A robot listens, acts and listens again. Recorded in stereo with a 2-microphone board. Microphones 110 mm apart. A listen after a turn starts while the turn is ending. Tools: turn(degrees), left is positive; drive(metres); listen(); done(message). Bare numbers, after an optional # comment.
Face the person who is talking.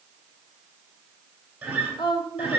# The woman speaking: about 45° left or 135° left.
turn(45)
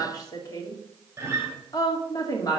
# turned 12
# So it is at 35° left.
turn(35)
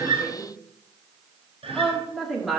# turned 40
done("Facing the woman speaking, 2 to 4 m away.")